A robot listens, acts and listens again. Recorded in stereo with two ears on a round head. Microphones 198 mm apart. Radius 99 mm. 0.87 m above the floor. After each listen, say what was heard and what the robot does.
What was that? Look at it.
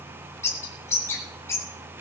Turn 30° left.
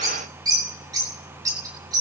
So it is at 20° right. Turn 20° right.
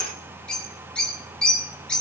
Found it: a bird, straight ahead, 2 to 4 m away.